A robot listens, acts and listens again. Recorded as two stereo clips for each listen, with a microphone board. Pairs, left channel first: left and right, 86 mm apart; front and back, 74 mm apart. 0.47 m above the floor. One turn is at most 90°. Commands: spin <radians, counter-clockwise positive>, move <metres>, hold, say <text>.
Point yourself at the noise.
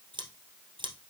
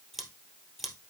spin -1.48
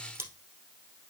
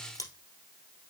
spin -0.52
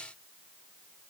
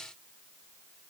hold
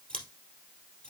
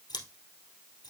spin 0.26
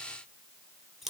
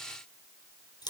say Facing the scissors, 2 to 4 m away.